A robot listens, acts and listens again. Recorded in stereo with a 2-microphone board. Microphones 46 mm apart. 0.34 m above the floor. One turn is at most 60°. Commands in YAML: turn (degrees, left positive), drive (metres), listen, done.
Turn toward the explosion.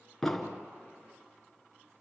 turn: 30
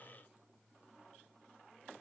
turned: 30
listen: true
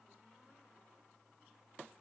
done: "I heard an explosion, but can't make it out now. It was about 25° right or 145° left."